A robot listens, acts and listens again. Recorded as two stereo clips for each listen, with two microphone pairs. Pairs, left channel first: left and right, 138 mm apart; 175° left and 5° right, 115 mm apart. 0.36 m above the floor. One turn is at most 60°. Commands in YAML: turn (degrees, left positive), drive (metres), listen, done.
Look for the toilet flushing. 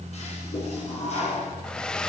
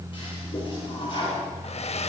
turn: 60
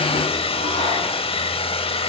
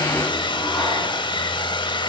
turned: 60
turn: 60
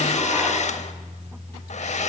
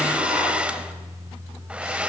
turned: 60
turn: 10
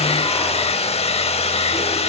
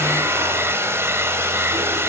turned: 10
done: "Facing where the toilet flushing came from. I can't hear it now."